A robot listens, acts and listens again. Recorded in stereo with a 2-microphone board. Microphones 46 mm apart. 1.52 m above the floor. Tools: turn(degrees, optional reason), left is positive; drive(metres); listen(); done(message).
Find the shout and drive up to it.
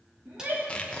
turn(degrees=-55, reason="The shout: about 55° right or 125° right.")
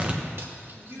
turn(degrees=-70, reason="So it is at 70° right.")
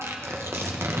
listen()
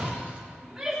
turn(degrees=-10, reason="The shout is now 10° right.")
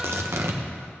listen()
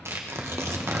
listen()
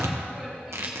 done("Facing where the shout came from. I can't hear it now. I did not reach it.")